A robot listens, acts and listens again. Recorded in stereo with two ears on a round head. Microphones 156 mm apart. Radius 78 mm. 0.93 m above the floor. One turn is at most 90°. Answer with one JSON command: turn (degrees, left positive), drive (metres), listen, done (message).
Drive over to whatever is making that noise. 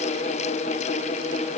{"listen": true}
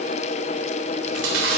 {"turn": -90}
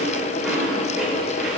{"drive": 1.0}
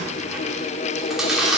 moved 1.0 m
{"drive": 1.0}
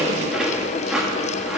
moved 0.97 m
{"drive": 1.0}
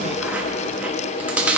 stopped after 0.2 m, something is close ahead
{"turn": -10}
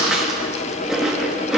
{"done": "I am next to the chewing."}